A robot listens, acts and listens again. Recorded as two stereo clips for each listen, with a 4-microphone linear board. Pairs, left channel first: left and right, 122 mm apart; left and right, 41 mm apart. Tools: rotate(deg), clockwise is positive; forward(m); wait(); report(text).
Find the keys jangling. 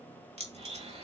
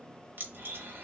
rotate(60)
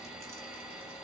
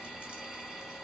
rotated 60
wait()
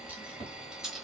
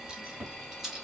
report("Found it: keys jangling, straight ahead, 1 to 2 m away.")